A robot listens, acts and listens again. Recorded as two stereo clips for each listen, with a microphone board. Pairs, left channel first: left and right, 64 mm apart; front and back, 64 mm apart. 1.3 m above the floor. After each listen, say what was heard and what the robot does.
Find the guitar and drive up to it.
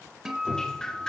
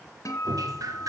The guitar: 10° right. Turn 10° right.
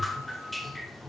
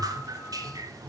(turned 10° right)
Keep listening.
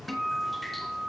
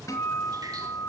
Drive 1.0 m forward.
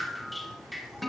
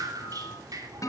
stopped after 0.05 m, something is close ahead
Blocked. The guitar is further on, straight ahead.